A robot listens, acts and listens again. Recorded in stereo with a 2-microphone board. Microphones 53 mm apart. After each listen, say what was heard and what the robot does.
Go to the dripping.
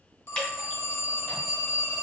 The dripping: about 15° left or 165° left. Turn 15° left.
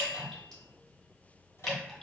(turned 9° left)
Turn 30° left.
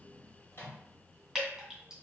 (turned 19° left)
So it is at 10° right. Turn 10° right.
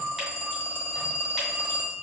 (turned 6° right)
Keep listening.
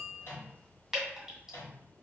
Drive 1.0 m forward.
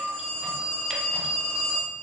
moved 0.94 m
Keep listening.
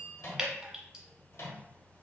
The dripping is now 10° right. Turn 10° right.
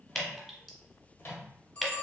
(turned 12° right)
Drive 1.0 m forward.
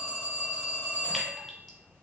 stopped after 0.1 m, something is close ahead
Keep listening.
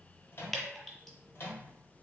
I am next to the dripping.